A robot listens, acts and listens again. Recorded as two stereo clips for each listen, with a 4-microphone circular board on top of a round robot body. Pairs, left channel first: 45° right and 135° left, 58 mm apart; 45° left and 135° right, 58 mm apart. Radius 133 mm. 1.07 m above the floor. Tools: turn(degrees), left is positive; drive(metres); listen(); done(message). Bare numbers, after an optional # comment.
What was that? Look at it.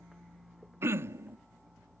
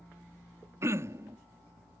# The throat clearing: 175° right.
turn(-175)
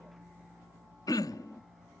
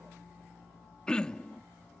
# The throat clearing is now 30° right.
turn(-30)
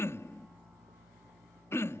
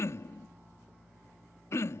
done("Found it: throat clearing, straight ahead.")